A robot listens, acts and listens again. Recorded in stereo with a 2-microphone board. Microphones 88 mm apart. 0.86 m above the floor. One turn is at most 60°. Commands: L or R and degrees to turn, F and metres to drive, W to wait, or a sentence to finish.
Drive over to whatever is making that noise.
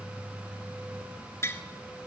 L30
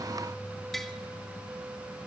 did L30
F1.0
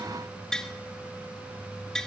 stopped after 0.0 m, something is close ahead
L10
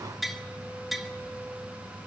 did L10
Something is in my way. I am facing the tapping but have not reached it.